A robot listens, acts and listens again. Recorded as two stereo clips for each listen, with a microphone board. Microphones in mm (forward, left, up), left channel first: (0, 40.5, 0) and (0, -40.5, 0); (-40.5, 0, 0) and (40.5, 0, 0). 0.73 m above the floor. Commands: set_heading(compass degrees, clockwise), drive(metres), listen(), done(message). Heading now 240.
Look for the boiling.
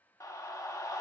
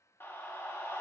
listen()
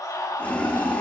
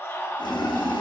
set_heading(75)
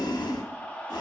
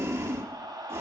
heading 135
set_heading(75)
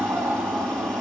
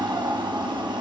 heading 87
set_heading(77)
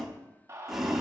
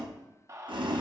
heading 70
done("Facing the boiling.")